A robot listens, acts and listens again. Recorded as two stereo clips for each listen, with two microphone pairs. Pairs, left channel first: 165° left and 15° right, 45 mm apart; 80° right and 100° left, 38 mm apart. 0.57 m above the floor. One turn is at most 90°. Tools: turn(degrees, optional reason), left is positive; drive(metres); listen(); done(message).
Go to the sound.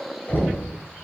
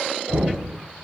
turn(degrees=90, reason="The knocking: 125° left.")
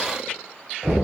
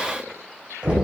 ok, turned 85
turn(degrees=40, reason="The knocking is now 40° left.")
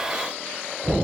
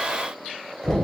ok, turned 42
drive(metres=1.0)
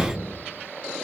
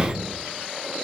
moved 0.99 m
turn(degrees=-10, reason="The knocking is now 10° right.")
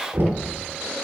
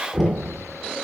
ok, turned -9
drive(metres=1.0)
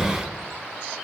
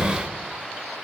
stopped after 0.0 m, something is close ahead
done("Arrived at the knocking, straight ahead.")